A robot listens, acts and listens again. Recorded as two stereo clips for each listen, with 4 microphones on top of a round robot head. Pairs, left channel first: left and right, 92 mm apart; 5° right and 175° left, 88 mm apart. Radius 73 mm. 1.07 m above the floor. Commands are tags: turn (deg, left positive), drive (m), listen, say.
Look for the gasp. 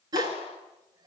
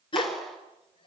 <turn deg="-40"/>
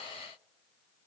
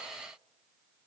<say>I heard a gasp from this way, but can't make it out now.</say>